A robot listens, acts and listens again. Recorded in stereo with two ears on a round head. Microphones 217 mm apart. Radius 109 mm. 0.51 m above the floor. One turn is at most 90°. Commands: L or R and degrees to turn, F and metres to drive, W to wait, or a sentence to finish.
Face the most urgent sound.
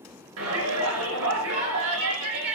R60
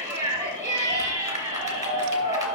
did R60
R15
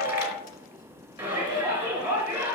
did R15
R10
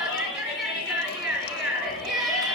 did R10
Facing the shout.